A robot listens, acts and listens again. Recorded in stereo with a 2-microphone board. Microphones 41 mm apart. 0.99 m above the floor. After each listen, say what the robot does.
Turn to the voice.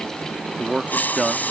Turn 20° right.
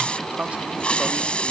Turn 140° right.
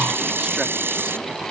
Keep listening.
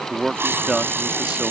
Turn 15° right.
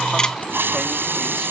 Keep listening.
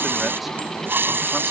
Keep listening.
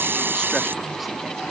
I heard a man speaking from this way, but can't make it out now.